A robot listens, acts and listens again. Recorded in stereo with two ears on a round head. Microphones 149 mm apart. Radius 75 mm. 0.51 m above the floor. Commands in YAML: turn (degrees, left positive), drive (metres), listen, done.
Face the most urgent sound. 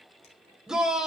turn: -30
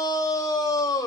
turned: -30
turn: 25
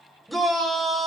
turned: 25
done: "Found it: a shout, straight ahead."